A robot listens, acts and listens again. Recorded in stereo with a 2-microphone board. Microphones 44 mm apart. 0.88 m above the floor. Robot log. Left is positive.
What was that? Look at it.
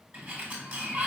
note: The sliding door: about 45° right or 135° right.
cmd yaw -45
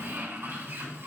note: So it is at 90° right.
cmd yaw -90
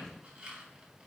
note: The sliding door is now 20° right.
cmd yaw -20
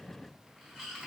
end: Facing the sliding door.